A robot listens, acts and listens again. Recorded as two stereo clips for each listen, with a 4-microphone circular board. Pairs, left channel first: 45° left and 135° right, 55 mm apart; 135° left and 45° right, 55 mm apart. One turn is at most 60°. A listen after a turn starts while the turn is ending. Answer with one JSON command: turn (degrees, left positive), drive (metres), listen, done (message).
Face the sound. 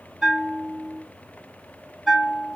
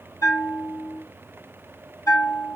{"turn": 60}
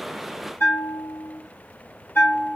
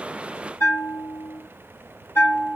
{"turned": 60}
{"turn": 60}
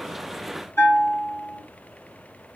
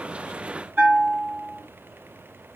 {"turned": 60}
{"turn": 15}
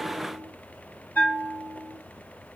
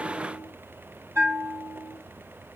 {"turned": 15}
{"done": "Found it: a bell, straight ahead."}